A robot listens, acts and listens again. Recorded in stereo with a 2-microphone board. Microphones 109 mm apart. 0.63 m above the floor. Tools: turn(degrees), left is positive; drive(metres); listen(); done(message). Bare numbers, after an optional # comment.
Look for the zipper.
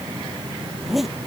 turn(30)
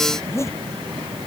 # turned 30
# So it is at 155° left.
turn(155)
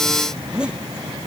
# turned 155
# The zipper is now 10° right.
turn(-10)
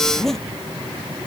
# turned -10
done("Found it: a zipper, straight ahead.")